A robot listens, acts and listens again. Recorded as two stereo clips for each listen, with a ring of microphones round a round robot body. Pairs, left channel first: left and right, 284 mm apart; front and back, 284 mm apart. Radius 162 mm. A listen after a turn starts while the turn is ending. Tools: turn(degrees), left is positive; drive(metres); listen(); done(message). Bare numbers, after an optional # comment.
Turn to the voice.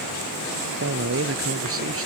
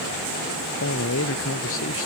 # The man speaking: 50° right.
turn(-50)
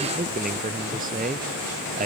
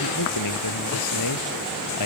# The man speaking is now 25° right.
turn(-25)
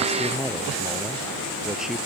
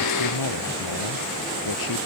done("Facing the man speaking.")